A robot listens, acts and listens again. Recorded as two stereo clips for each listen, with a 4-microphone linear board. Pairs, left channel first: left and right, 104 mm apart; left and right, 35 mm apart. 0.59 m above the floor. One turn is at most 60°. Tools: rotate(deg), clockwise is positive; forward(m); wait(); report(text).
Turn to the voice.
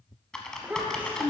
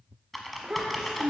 rotate(15)
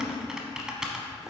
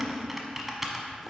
wait()
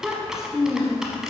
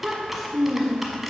report("Facing the child speaking.")